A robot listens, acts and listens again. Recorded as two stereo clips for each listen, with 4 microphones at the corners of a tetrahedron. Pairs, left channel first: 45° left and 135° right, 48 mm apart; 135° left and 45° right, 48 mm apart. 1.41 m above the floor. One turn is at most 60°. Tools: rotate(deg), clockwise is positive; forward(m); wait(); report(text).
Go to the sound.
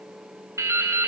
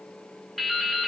rotate(60)
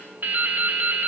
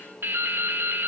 rotate(60)
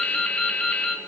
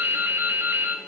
rotate(20)
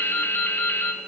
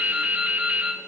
forward(1.0)
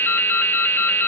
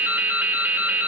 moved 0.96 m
forward(1.0)
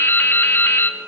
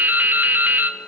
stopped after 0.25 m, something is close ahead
report("I am next to the dripping.")